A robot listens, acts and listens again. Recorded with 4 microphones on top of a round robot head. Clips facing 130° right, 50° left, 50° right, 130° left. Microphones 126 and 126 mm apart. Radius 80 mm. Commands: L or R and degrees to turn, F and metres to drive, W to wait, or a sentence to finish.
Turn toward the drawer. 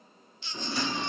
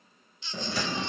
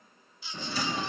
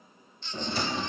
L70
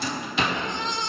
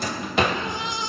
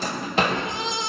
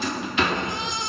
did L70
Facing the drawer.